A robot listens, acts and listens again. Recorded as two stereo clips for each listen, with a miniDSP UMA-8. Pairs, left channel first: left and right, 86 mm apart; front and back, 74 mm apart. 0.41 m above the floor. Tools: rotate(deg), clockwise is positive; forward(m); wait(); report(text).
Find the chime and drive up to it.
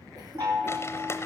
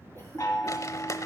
rotate(45)
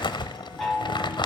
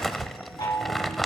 forward(1.0)
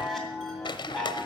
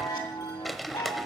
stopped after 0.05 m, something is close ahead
report("Something is in my way. I am facing the chime but have not reached it.")